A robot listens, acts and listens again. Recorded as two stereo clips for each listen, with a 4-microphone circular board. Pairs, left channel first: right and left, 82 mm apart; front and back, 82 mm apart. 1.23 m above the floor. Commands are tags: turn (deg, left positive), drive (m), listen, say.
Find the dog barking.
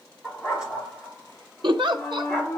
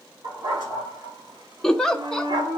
<turn deg="175"/>
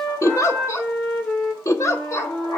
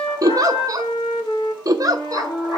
<turn deg="-40"/>
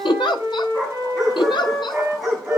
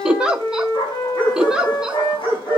<say>Facing the dog barking.</say>